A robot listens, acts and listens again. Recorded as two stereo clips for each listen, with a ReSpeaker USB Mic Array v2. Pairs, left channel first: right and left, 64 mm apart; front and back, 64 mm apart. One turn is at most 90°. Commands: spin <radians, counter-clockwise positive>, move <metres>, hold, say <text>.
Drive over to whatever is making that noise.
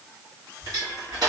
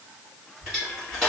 spin 1.57
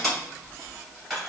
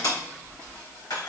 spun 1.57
move 1.0
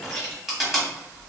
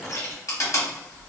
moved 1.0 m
move 1.0
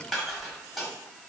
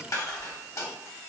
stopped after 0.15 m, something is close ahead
say I am next to the crushing.